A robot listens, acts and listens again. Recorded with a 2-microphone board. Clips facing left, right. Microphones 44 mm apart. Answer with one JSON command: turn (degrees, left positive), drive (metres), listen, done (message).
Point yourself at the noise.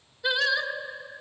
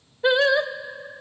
{"turn": -35}
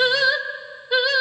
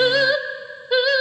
{"done": "Found it: singing, straight ahead, under 1 m away."}